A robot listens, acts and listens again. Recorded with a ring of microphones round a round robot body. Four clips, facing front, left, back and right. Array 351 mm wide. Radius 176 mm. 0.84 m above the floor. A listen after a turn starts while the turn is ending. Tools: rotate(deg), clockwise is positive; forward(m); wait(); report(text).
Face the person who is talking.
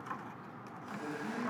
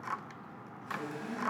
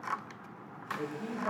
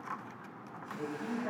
wait()
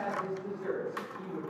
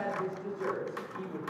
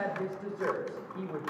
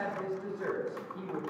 rotate(165)
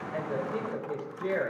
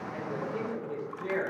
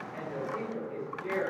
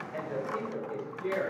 report("Facing the woman speaking, 2 to 4 m away.")